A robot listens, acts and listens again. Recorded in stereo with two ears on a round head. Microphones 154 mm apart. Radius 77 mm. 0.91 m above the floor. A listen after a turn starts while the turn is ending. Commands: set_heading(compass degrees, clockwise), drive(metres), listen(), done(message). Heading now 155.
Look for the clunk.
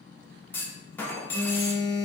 set_heading(125)
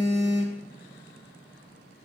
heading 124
listen()
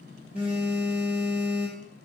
done("I heard a clunk, but can't make it out now. It was about 20° right or 140° left.")